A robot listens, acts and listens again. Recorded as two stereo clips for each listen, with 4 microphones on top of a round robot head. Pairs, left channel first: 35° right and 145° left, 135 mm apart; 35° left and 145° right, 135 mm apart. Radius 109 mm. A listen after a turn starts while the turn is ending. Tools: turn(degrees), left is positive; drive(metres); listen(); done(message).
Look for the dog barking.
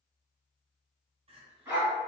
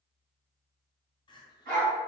turn(degrees=-150)
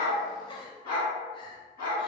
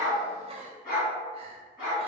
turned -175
turn(degrees=10)
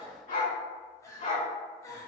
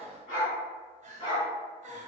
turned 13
done("Found it: a dog barking, straight ahead, 2 to 4 m away.")